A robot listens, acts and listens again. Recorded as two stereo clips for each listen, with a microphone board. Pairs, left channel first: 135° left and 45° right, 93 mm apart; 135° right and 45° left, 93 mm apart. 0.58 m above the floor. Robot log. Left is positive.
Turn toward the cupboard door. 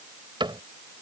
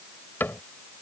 note: The cupboard door: 70° right.
cmd yaw -70
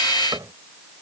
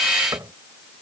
end: Facing the cupboard door.